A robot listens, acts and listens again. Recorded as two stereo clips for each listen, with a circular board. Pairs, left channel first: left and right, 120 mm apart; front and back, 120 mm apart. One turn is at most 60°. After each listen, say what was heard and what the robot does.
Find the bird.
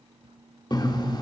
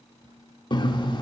The bird: 45° left. Turn 45° left.
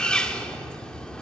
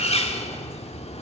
The bird is now 10° left. Turn 10° left.
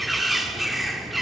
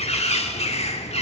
Facing the bird.